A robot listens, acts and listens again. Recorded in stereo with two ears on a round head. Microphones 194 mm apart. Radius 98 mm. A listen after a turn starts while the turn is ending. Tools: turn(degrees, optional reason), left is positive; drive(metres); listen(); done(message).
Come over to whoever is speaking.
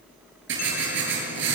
listen()
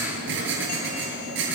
listen()
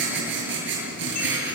done("I can't make out anyone speaking, only writing.")